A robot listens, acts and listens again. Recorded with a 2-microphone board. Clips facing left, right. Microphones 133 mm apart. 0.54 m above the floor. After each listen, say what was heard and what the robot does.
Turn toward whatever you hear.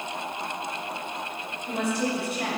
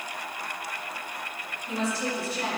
The woman speaking: about 60° left or 120° left. Turn 60° left.
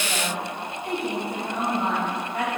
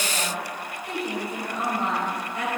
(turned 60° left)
So it is at 65° left. Turn 65° left.
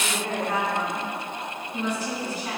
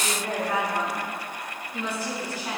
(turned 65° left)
The woman speaking is now 15° right. Turn 15° right.
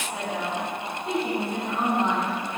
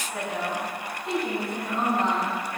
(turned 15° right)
Facing the woman speaking.